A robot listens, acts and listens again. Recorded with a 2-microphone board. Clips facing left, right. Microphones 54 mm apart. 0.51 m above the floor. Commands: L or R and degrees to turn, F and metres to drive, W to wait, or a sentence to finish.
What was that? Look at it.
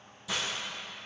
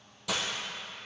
R65
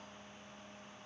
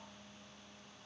W
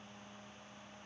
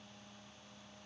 I heard breaking glass, but can't make it out now. It was about straight ahead or 50° right.